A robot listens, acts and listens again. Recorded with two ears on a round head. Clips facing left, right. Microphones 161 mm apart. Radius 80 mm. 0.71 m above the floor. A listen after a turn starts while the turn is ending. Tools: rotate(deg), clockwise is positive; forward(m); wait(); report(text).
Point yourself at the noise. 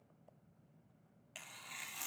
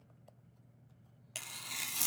rotate(55)
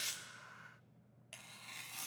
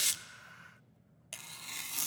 rotate(70)
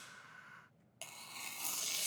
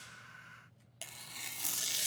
rotate(10)
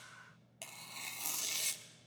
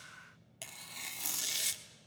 report("Found it: tearing paper, straight ahead, 1 to 2 m away.")